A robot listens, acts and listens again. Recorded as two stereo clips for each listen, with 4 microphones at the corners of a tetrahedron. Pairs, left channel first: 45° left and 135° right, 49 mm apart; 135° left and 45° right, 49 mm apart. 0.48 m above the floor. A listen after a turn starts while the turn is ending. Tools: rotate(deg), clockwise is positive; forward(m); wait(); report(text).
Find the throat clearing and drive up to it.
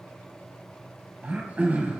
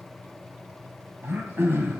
rotate(80)
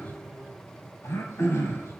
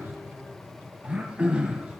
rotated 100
rotate(-20)
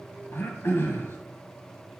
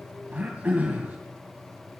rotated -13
rotate(-10)
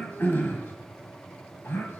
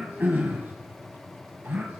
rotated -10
forward(1.0)
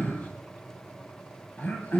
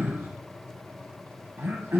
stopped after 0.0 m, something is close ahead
rotate(10)
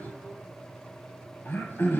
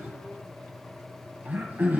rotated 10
report("Something is in my way. I am facing the throat clearing but have not reached it.")